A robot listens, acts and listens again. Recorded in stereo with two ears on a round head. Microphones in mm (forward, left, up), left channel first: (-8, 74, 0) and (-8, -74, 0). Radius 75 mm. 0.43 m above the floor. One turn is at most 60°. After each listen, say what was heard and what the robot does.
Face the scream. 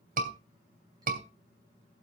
The scream: about 50° right or 130° right. Turn 50° right.
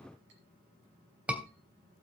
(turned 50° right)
So it is at 10° right. Turn 10° right.
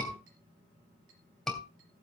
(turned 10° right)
Found it: a scream, straight ahead.